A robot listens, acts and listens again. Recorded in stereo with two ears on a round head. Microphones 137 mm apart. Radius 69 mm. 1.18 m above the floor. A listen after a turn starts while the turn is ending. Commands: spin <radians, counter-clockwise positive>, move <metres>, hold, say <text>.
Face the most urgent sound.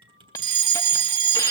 spin -0.52
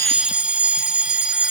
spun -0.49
spin -0.17
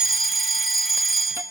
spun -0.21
say Facing the fire alarm, 1 to 2 m away.